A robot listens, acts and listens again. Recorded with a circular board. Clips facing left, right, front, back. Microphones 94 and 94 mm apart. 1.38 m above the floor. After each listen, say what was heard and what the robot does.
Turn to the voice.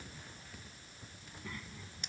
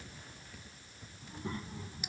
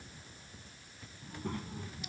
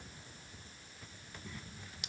The child speaking: 30° right. Turn 30° right.
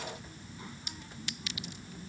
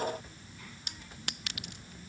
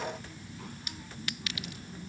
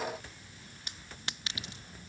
The child speaking is now 25° left. Turn 25° left.
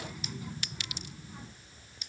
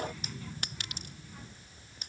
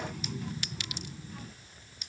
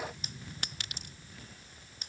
The child speaking is now 15° left. Turn 15° left.
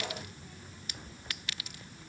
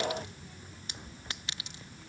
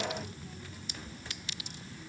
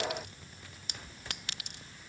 Found it: a child speaking, straight ahead.